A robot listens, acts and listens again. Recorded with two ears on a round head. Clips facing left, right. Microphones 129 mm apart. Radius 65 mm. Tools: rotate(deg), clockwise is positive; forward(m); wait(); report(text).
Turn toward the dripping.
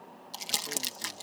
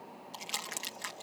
wait()
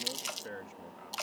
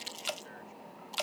rotate(35)
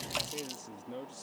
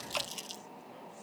wait()
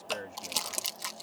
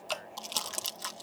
report("Found it: dripping, straight ahead.")